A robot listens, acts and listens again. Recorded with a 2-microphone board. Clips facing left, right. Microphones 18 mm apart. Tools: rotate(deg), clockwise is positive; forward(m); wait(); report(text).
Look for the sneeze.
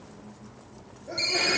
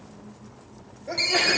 rotate(35)
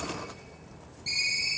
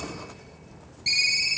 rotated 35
wait()
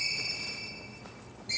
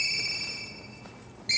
report("I heard a sneeze, but can't make it out now. It was about straight ahead or 110° right.")